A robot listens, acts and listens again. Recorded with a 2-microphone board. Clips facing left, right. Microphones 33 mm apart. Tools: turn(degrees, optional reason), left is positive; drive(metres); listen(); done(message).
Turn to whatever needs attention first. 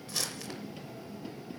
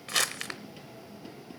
listen()
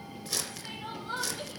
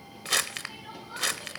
turn(degrees=90)
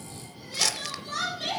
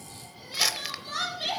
turn(degrees=-10, reason="So it is at 10° right.")
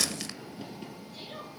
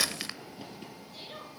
done("Facing the crying.")